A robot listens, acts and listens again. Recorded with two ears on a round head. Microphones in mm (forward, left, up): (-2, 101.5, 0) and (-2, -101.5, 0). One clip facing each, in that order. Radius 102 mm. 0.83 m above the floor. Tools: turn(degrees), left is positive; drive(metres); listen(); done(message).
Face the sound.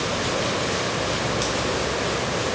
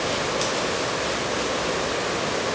listen()
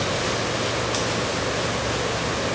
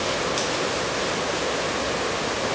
listen()
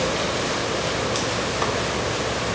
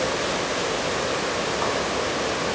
done("I can't make out anything to turn to.")